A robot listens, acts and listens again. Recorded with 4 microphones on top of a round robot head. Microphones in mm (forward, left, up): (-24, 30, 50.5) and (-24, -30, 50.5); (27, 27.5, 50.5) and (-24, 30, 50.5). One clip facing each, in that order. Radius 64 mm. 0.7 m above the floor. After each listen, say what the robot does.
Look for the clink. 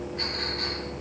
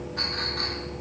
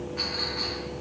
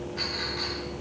Turn 75° right.
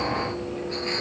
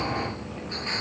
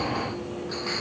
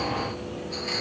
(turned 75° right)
Facing the clink, over 4 m away.